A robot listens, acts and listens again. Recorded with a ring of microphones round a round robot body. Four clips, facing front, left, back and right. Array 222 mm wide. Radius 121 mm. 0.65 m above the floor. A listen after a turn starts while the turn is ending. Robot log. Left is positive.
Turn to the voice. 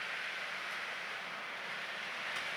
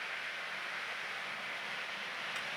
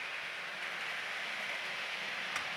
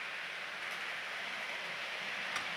cmd idle
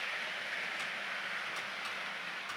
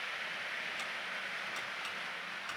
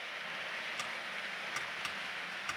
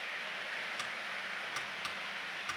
cmd idle
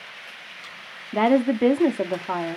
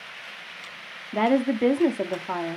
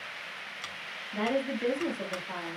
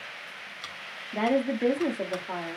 note: The woman speaking: 20° left.
cmd yaw +20
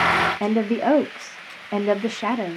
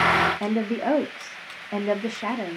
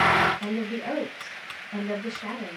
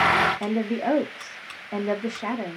end: Found it: a woman speaking, straight ahead, 1 to 2 m away.